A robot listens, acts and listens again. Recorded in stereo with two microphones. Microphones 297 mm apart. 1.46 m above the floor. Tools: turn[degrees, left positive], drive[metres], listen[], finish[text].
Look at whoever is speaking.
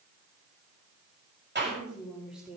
Action: turn[-30]
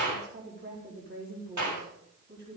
Thought: So it is at 145° right.
Action: turn[-145]
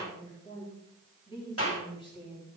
Thought: The woman speaking is now 15° left.
Action: turn[15]
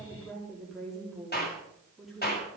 Action: finish[Facing the woman speaking.]